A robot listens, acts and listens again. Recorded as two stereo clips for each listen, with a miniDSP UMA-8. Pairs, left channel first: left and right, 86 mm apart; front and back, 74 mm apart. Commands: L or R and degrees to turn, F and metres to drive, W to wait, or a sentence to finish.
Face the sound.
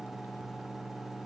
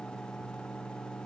W
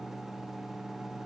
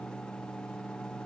W
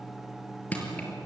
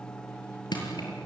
L15
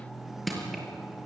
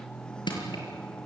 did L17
Found it: crushing, straight ahead, over 4 m away.